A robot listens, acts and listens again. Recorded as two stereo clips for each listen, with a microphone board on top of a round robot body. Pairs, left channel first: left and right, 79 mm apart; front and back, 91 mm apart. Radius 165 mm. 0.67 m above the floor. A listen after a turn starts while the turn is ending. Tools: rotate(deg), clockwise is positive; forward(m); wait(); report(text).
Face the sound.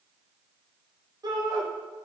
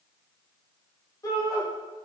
rotate(55)
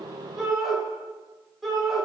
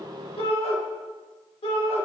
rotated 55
report("Facing the shout, 2 to 4 m away.")